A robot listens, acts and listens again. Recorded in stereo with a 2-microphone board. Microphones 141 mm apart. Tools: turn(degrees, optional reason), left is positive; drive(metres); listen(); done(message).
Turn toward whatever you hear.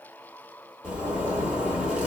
turn(degrees=-30)
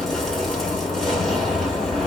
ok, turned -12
done("Found it: a zipper, straight ahead, 1 to 2 m away.")